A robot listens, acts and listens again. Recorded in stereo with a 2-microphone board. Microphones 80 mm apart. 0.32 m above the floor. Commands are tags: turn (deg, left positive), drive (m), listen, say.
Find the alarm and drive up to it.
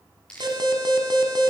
<turn deg="-65"/>
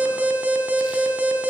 <turn deg="-20"/>
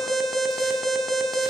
<drive m="1.0"/>
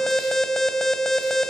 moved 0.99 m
<drive m="1.0"/>
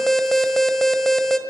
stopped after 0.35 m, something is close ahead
<say>Arrived at the alarm, straight ahead.</say>